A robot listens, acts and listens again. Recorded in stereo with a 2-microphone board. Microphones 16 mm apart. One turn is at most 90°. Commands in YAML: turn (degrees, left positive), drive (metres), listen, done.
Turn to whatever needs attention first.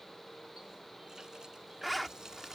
listen: true
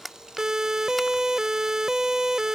turn: -40
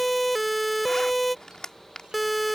done: "Facing the siren."